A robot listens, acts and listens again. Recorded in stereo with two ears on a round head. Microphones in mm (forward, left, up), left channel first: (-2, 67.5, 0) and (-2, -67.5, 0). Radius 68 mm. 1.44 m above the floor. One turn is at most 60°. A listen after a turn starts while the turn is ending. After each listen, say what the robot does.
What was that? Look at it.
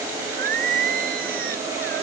Turn 60° right.
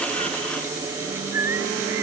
Turn 15° right.
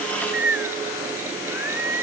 Turn 15° right.
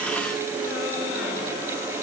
Keep listening.
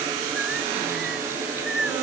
Found it: singing, straight ahead.